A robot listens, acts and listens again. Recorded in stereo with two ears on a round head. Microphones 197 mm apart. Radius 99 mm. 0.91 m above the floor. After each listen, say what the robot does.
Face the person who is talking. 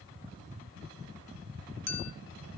Keep listening.
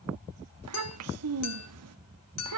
Turn 90° right.
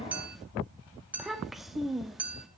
Found it: a child speaking, straight ahead, 1 to 2 m away.